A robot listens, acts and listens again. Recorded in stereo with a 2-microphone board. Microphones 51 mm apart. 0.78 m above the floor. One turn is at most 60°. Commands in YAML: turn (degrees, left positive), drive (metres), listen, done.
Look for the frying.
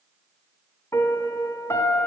listen: true
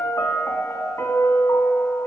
listen: true
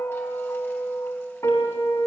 done: "I can't make out frying to turn to."